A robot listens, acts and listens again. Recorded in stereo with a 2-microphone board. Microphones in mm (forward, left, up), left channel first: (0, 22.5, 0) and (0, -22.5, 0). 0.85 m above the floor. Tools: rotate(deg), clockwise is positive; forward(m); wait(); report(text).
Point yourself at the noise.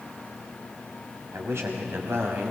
rotate(65)
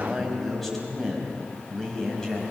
rotate(-15)
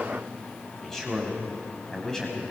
rotate(-15)
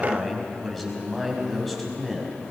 report("Found it: a man speaking, straight ahead, over 4 m away.")